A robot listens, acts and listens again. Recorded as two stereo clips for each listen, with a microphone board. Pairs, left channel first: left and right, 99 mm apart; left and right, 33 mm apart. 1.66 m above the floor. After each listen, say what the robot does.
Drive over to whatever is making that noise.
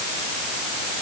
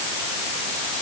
Keep listening.
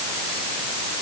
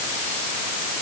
Keep listening.
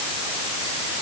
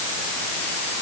I can't make out anything to turn to.